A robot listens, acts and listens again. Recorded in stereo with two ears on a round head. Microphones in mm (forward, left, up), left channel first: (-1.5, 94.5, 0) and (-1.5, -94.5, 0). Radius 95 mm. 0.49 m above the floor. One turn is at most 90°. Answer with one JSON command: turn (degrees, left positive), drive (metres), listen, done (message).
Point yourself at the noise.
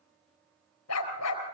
{"turn": 90}
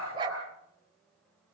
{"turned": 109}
{"turn": -25}
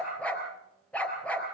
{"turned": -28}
{"done": "Found it: a dog barking, straight ahead."}